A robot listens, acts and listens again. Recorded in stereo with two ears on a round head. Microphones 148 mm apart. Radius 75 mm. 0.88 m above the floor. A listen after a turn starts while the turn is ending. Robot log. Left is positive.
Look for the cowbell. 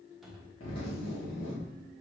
cmd idle
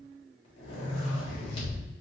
cmd idle
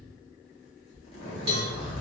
note: The cowbell: about 35° right or 145° right.
cmd yaw -35
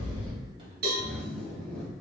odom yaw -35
note: So it is at 110° right.
cmd yaw -110
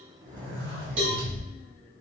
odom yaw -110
note: The cowbell is now 40° right.
cmd yaw -40
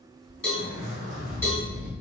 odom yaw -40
note: The cowbell is now 10° left.
cmd yaw +10
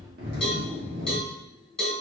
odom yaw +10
end: Facing the cowbell, 1 to 2 m away.